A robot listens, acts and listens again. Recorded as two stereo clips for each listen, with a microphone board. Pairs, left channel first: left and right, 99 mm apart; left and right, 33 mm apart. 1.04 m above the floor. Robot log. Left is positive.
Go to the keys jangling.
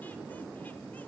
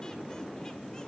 cmd idle
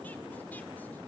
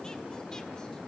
cmd idle
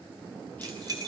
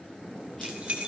note: The keys jangling: about 40° right or 140° right.
cmd yaw -40
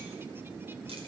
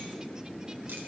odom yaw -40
cmd idle
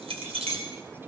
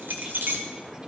note: So it is at 95° right.
cmd yaw -95
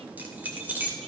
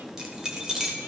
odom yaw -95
note: The keys jangling is now 20° right.
cmd yaw -20
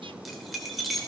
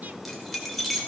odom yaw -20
cmd fwd 1.0
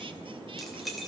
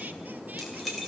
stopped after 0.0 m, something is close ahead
end: Something is in my way. I am facing the keys jangling but have not reached it.